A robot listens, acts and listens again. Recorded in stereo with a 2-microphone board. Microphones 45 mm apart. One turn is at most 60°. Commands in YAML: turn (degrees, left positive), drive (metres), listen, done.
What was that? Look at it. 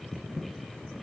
listen: true
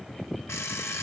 turn: 60
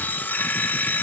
turn: 40
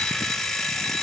done: "Facing the alarm clock, 1 to 2 m away."